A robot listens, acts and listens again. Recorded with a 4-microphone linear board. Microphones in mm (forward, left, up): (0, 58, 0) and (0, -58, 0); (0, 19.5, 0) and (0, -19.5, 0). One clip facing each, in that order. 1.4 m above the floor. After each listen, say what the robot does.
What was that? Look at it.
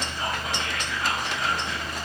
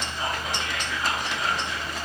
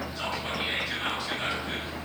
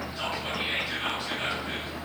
Turn 20° right.
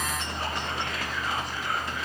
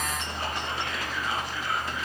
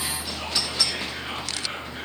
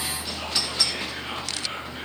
Facing the whispering.